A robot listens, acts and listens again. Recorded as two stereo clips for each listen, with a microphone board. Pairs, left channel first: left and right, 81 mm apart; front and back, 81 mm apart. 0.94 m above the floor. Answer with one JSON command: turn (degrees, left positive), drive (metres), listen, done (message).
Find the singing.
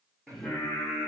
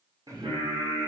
{"turn": 175}
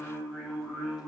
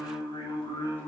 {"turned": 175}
{"done": "Found it: singing, straight ahead."}